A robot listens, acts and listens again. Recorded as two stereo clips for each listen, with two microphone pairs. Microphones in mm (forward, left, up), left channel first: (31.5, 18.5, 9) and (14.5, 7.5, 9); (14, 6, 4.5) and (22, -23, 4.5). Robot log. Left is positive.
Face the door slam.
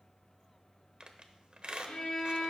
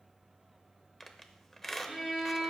cmd idle
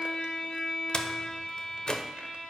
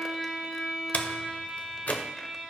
note: The door slam: 80° left.
cmd yaw +80
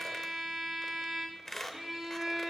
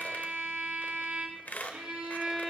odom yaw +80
end: I heard a door slam from this way, but can't make it out now.